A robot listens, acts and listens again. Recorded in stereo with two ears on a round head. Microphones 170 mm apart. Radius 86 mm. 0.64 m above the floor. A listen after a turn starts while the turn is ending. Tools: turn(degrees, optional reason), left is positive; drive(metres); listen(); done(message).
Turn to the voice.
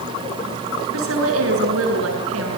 turn(degrees=-90)
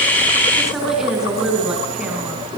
done("Facing the woman speaking.")